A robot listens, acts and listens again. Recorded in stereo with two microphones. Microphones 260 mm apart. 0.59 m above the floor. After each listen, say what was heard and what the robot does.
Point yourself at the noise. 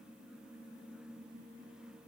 Keep listening.
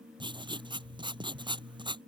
The writing: about 20° right or 160° right. Turn 20° right.
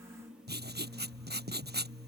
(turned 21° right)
So it is at 140° right. Turn 140° right.
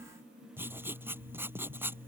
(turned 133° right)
The writing is now 10° right. Turn 10° right.
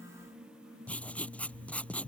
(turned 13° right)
Found it: writing, straight ahead.